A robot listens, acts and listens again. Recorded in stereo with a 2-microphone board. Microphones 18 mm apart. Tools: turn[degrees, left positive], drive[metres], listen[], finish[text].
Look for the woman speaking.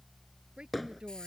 Thought: The woman speaking: about 70° right or 110° right.
Action: turn[-70]
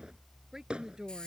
Thought: So it is at 35° right.
Action: turn[-35]
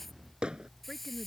Thought: The woman speaking is now 10° left.
Action: turn[10]
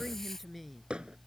Action: finish[Facing the woman speaking.]